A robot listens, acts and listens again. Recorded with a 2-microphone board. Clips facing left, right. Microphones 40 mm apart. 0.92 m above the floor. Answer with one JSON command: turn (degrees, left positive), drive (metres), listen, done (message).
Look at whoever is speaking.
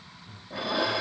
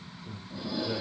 {"turn": -90}
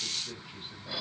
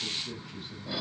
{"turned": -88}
{"turn": 15}
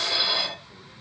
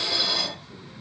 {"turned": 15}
{"listen": true}
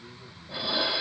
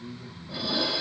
{"done": "Facing the man speaking, over 4 m away."}